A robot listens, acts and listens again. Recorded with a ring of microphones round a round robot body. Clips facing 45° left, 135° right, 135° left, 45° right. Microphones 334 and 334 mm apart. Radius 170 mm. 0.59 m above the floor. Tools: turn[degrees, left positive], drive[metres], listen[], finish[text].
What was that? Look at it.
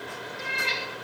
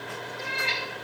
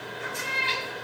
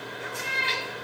Action: finish[Found it: a cat meowing, straight ahead.]